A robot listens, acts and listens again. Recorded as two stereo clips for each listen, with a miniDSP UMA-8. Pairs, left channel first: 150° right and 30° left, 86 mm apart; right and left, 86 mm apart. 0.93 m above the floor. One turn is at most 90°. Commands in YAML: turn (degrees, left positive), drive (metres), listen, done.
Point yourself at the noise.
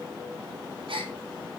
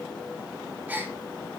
turn: 20
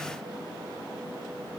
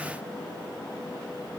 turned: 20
done: "I heard a gasp from this way, but can't make it out now."